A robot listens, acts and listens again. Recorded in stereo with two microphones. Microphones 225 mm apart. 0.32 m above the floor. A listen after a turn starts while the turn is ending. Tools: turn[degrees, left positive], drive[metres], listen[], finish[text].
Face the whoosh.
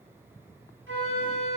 Action: listen[]
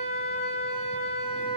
Action: listen[]
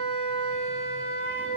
Action: finish[I can't make out a whoosh, only a flute.]